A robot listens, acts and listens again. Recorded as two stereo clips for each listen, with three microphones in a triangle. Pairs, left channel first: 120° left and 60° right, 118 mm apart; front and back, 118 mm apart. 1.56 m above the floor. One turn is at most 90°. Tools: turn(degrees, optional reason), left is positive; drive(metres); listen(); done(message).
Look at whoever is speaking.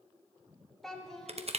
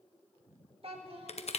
turn(degrees=-90, reason="The child speaking: 155° right.")
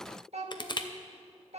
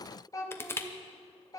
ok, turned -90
turn(degrees=-60, reason="The child speaking is now 60° right.")
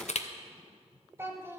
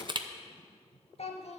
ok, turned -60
turn(degrees=10, reason="The child speaking is now 10° left.")
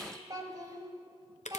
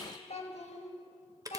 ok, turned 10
done("Facing the child speaking.")